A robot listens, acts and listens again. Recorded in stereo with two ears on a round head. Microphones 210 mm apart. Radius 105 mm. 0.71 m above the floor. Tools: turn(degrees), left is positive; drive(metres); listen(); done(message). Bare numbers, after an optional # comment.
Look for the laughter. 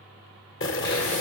listen()
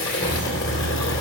# The laughter: about 55° left or 125° left.
turn(55)
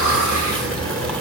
# So it is at 55° left.
turn(55)
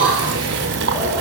# The laughter is now 10° right.
turn(-10)
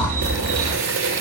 # The laughter is now 10° right.
turn(-10)
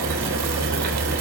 # The laughter is now 10° right.
turn(-10)
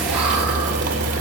done("Found it: laughter, straight ahead, over 4 m away.")